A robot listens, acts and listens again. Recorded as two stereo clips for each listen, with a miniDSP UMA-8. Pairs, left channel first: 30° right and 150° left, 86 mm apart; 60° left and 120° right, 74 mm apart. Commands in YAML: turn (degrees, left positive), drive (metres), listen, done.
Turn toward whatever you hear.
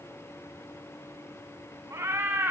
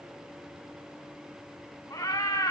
turn: 85
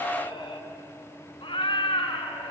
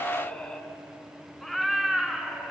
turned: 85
turn: -40
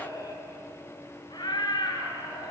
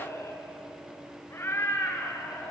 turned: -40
done: "Facing the cat meowing."